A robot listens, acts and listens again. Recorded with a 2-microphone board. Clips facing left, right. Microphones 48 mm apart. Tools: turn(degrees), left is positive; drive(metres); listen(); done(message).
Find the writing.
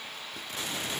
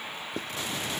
turn(degrees=-55)
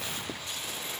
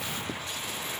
listen()
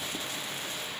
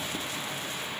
listen()
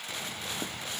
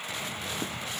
done("I heard writing, but can't make it out now. It was about straight ahead or 70° right.")